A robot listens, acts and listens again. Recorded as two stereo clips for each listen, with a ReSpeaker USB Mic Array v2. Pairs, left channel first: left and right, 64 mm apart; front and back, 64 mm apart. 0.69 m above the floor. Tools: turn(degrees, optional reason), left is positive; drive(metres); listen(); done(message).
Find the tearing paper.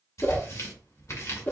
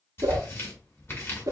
turn(degrees=55, reason="The tearing paper: 55° left.")
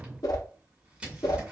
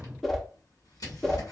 turn(degrees=-15, reason="The tearing paper is now 15° right.")
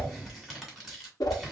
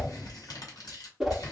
done("Facing the tearing paper.")